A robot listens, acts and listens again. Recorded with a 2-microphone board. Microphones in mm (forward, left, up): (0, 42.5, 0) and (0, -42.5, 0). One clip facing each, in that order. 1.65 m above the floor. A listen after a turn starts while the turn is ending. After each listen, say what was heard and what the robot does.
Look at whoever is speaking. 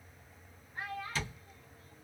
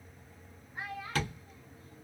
Turn 30° right.
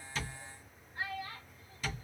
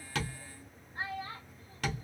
So it is at 145° right. Turn 145° right.
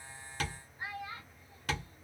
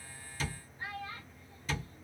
The child speaking is now 20° left. Turn 20° left.
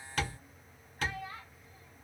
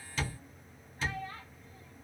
Facing the child speaking.